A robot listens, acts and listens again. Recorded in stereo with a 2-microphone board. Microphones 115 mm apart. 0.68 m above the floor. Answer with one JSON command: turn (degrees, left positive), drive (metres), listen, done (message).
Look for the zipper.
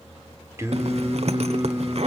{"turn": -65}
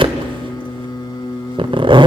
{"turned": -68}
{"turn": -45}
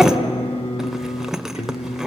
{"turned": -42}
{"done": "Found it: a zipper, straight ahead, 1 to 2 m away."}